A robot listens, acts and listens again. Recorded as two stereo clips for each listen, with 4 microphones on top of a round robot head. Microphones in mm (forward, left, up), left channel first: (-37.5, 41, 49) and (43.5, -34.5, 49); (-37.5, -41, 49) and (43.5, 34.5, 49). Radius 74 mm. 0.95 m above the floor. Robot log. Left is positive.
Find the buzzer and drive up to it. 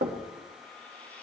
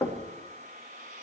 cmd idle
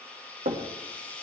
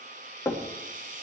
cmd idle
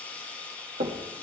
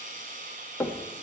end: I can't make out a buzzer to turn to.